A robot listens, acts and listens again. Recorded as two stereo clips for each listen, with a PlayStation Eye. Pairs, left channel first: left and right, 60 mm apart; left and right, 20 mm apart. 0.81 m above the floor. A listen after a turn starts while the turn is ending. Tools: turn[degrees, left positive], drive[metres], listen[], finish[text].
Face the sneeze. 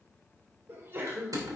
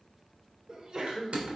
Thought: The sneeze: about 40° right or 140° right.
Action: turn[-40]
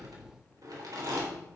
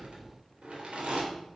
Action: listen[]
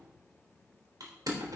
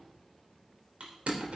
Action: finish[I heard a sneeze, but can't make it out now. It was about straight ahead or 100° right.]